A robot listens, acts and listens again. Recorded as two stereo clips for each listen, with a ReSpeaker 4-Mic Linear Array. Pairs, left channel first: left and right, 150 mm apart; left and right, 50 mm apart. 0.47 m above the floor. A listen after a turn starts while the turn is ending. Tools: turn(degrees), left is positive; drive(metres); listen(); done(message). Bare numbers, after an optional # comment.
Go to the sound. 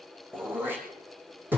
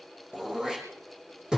turn(-30)
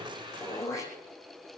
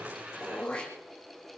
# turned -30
# So it is at 20° left.
turn(20)
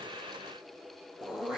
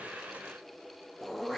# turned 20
drive(1.0)
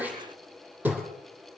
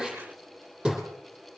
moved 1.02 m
# The throat clearing is now 10° right.
turn(-10)
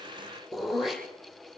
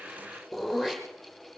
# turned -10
drive(1.0)
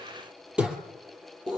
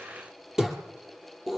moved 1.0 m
drive(1.0)
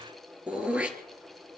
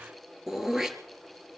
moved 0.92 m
# The throat clearing is now 10° right.
turn(-10)
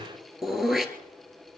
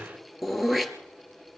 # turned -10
drive(1.0)
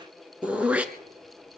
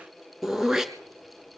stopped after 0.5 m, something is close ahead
# The throat clearing is now 10° right.
turn(-10)
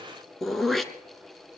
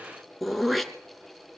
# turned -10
done("I am next to the throat clearing.")